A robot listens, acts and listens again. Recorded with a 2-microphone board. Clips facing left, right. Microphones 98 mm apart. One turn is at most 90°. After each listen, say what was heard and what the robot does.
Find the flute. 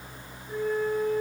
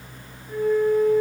The flute: about 70° right or 110° right. Turn 70° right.
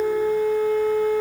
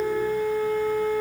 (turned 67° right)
So it is at 40° right. Turn 40° right.
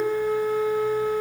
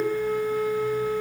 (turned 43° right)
Found it: a flute, straight ahead.